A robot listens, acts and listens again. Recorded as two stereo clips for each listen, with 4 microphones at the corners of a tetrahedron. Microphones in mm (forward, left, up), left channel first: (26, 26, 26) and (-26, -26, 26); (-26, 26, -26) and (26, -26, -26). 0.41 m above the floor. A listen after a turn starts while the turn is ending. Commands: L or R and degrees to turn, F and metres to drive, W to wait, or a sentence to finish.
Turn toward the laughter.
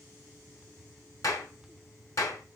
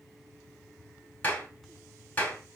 W
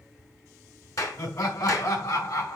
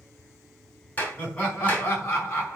L75
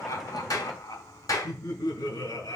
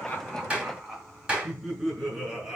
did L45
L35
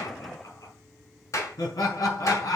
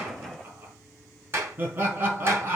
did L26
L10
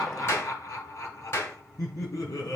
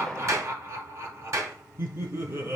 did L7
Found it: laughter, straight ahead.